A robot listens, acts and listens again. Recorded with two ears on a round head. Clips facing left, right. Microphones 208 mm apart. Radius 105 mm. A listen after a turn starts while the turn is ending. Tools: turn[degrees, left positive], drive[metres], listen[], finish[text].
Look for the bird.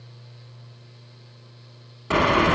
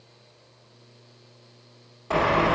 Thought: The bird: about 30° left or 150° left.
Action: turn[30]
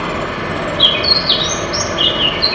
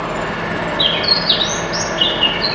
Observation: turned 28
Action: finish[Found it: a bird, straight ahead.]